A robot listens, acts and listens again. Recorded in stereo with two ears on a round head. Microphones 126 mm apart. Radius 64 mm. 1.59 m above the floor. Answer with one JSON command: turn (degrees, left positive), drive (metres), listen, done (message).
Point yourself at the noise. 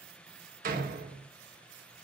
{"turn": -70}
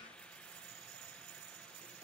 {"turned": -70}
{"listen": true}
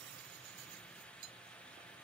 {"done": "I heard a door slam, but can't make it out now. It was about straight ahead or 40° right."}